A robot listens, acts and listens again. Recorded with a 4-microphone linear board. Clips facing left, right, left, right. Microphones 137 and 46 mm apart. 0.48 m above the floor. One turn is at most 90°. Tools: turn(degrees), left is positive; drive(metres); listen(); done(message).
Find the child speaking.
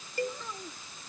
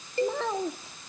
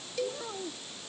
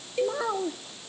turn(degrees=-90)
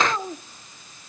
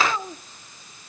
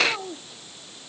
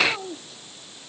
turn(degrees=10)
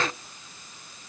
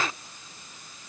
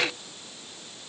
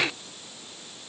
listen()
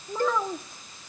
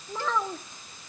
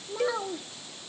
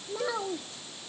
done("Facing the child speaking.")